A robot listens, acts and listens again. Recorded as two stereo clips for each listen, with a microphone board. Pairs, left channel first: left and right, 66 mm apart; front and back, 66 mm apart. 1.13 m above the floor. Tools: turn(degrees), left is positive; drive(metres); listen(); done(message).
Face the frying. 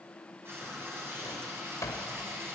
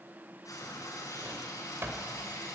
turn(degrees=-35)
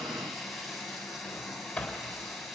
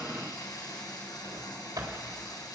done("Facing the frying, over 4 m away.")